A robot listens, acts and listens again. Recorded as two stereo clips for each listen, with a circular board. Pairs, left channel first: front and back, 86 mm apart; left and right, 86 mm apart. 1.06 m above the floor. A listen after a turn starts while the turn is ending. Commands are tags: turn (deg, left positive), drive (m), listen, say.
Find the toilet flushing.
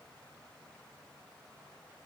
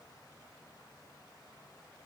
<listen/>
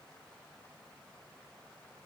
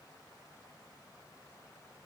<listen/>
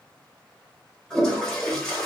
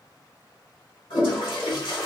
<turn deg="80"/>
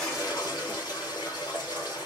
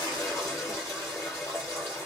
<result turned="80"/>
<turn deg="35"/>
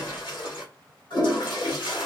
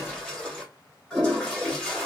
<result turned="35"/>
<turn deg="10"/>
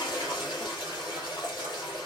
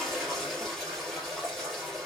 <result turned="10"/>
<say>Found it: a toilet flushing, straight ahead, 1 to 2 m away.</say>